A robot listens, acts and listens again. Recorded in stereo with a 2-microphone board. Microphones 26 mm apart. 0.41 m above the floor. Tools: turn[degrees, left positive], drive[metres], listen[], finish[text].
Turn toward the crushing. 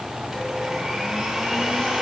Action: listen[]
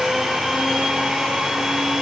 Action: listen[]
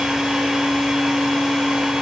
Action: finish[I can't make out crushing to turn to.]